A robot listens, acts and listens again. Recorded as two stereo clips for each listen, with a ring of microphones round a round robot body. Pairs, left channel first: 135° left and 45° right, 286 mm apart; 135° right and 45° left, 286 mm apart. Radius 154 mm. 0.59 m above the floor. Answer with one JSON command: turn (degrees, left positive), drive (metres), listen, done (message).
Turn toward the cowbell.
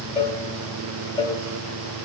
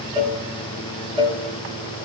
{"turn": 115}
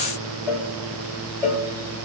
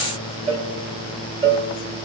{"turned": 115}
{"done": "Facing the cowbell."}